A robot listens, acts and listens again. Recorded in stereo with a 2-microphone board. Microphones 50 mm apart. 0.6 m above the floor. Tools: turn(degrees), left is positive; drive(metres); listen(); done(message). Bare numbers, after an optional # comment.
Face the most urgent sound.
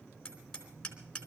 listen()
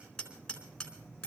listen()
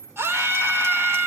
# The scream: about 55° right or 125° right.
turn(-55)
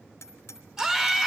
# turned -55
# So it is at 15° right.
turn(-15)
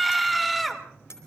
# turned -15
done("Facing the scream, 1 to 2 m away.")